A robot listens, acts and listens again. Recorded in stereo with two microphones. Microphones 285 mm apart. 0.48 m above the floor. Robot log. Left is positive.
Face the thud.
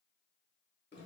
cmd idle
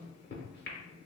cmd idle
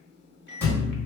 cmd yaw +30
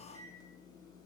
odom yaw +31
cmd idle
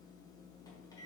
end: I heard a thud, but can't make it out now. It was about 25° right or 145° left.